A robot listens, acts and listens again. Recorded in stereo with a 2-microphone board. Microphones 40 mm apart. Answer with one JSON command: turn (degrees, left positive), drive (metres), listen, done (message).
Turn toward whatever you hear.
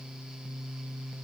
{"listen": true}
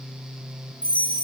{"turn": 35}
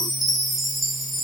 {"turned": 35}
{"done": "Facing the chime."}